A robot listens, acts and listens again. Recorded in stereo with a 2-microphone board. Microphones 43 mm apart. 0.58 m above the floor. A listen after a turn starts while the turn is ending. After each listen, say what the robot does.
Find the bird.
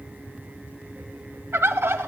Turn 75° right.
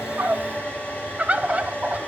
Turn 30° right.
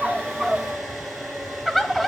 Facing the bird.